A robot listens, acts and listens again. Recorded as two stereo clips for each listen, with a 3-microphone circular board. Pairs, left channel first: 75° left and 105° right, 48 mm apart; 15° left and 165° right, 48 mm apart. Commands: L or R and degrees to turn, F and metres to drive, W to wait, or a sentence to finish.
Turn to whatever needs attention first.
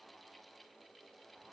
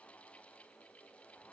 W
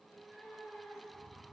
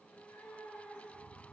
W
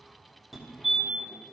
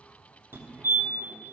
L170
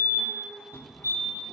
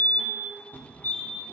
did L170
L65
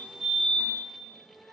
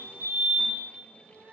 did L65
R20
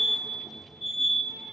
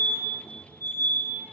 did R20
Facing the fire alarm.